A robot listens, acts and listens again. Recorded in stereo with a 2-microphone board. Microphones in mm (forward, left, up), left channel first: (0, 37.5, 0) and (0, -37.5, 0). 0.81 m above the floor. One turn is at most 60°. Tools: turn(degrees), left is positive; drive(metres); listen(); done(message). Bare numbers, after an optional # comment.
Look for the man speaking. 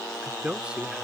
turn(-30)
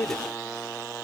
# So it is at 20° left.
turn(20)
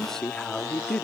# The man speaking is now 15° left.
turn(15)
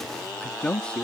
# The man speaking is now 15° left.
turn(15)
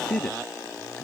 # The man speaking is now 10° left.
turn(10)
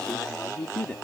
# The man speaking is now 15° left.
turn(15)
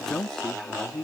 done("Facing the man speaking.")